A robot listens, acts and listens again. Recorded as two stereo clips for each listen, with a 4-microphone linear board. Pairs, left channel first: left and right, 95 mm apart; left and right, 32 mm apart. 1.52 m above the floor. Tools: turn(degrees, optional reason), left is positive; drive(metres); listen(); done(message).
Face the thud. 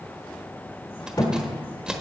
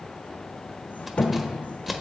turn(degrees=45, reason="The thud: about 45° left or 135° left.")
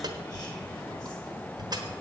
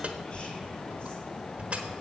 listen()
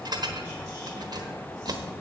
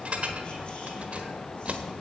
done("I heard a thud, but can't make it out now. It was about straight ahead or 90° left.")